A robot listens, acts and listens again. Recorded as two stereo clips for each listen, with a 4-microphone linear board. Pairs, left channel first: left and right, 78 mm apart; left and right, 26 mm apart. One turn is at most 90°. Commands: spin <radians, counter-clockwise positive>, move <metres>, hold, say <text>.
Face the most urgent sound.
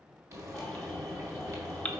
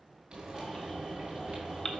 spin 0.26
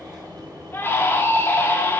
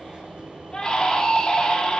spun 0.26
spin 1.57
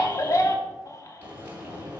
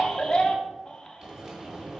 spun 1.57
spin 0.70
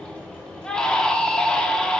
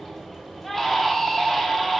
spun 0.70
spin 0.17
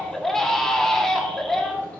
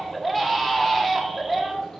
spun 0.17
say Found it: a baby crying, straight ahead.